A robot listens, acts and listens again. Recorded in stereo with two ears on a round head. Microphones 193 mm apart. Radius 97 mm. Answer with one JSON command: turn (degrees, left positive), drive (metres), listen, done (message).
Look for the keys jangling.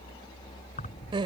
{"turn": 35}
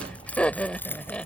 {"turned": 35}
{"turn": 10}
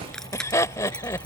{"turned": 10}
{"done": "Facing the keys jangling."}